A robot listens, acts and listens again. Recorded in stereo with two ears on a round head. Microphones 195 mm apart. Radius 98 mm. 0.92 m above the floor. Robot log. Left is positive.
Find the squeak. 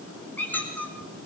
cmd yaw +30
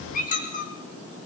note: So it is at 140° left.
cmd yaw +140
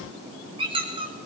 note: The squeak is now 25° right.
cmd yaw -25
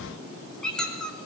end: Found it: a squeak, straight ahead, 2 to 4 m away.